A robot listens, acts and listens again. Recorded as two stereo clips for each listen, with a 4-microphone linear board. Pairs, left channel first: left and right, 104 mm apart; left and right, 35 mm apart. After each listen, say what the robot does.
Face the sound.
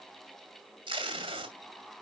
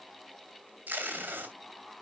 Turn 55° right.
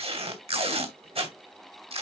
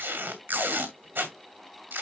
Turn 75° right.
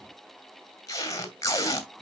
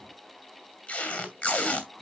Turn 35° left.
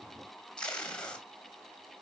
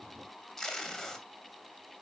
Turn 10° left.
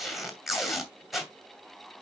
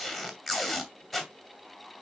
Found it: tape being pulled, straight ahead, 2 to 4 m away.